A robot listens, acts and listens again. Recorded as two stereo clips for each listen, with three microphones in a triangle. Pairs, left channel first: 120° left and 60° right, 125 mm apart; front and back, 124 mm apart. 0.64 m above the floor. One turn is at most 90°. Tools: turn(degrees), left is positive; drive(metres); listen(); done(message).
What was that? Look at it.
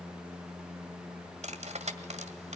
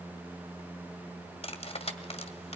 turn(degrees=-35)
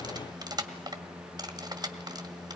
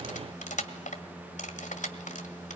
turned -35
done("Found it: cutlery clinking, straight ahead.")